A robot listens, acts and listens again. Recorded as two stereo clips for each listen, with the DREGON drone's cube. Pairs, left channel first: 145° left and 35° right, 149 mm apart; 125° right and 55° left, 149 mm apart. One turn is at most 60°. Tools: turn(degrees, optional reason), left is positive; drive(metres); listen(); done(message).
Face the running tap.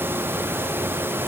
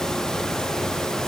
listen()
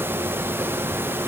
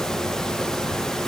listen()
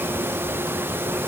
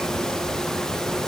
done("I can't make out a running tap.")